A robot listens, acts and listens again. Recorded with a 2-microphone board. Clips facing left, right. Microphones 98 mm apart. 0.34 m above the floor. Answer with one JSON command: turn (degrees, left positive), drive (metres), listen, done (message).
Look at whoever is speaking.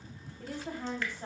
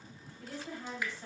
{"turn": 55}
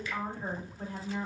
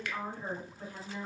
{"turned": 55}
{"turn": 50}
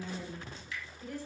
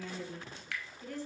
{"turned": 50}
{"turn": 15}
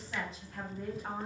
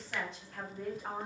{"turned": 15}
{"done": "Facing the woman speaking, 1 to 2 m away."}